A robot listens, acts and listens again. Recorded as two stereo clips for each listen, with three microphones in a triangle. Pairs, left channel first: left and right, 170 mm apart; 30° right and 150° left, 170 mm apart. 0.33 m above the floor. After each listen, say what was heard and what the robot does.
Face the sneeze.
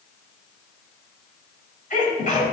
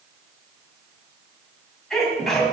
The sneeze: 60° left. Turn 60° left.
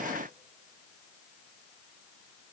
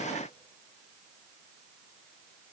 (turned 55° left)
I heard a sneeze from this way, but can't make it out now.